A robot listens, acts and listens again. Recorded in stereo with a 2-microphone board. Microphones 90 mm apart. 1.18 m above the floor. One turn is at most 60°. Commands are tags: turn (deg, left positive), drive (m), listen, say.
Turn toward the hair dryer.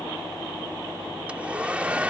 <turn deg="-30"/>
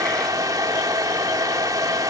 <turn deg="-60"/>
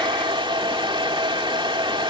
<turn deg="-60"/>
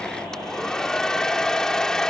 <say>Found it: a hair dryer, straight ahead.</say>